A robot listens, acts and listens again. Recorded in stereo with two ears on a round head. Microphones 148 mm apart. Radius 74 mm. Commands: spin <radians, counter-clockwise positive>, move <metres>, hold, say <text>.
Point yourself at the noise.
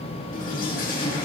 spin 0.96
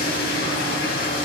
spin 1.13
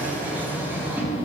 spin -0.26
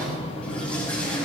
spin 0.17
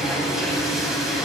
say Found it: a toilet flushing, straight ahead.